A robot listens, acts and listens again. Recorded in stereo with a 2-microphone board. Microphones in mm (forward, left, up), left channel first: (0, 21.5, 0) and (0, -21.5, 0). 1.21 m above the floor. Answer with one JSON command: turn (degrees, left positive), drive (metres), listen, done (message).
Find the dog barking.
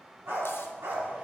{"turn": -75}
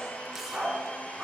{"turn": -15}
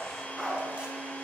{"done": "Found it: a dog barking, straight ahead."}